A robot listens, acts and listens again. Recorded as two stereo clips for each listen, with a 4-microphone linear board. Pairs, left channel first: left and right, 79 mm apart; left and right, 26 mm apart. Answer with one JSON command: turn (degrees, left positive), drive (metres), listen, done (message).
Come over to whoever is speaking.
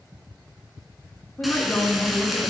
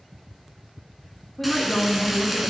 {"turn": 25}
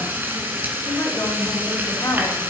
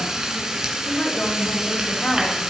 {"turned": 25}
{"turn": 130}
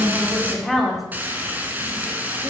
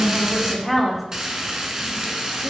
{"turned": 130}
{"drive": 1.0}
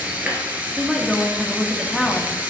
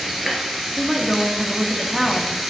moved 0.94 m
{"drive": 1.0}
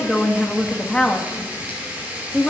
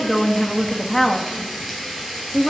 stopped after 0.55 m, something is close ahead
{"turn": 10}
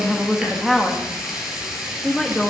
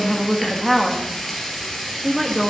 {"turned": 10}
{"done": "I am next to the woman speaking."}